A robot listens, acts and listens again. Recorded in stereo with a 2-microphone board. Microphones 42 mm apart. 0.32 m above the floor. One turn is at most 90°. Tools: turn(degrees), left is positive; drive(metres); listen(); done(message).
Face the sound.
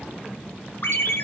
turn(degrees=65)
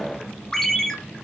turn(degrees=15)
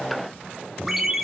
done("Facing the ringtone.")